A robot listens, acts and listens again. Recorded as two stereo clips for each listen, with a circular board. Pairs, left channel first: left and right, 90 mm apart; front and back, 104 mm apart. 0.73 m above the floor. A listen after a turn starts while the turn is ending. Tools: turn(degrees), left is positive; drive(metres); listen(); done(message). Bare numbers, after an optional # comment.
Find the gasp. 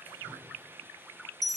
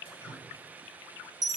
listen()
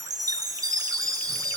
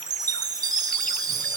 listen()
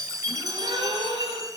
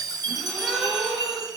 # The gasp: 90° right.
turn(-90)
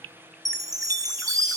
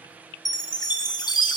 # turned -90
done("Facing where the gasp came from. I can't hear it now.")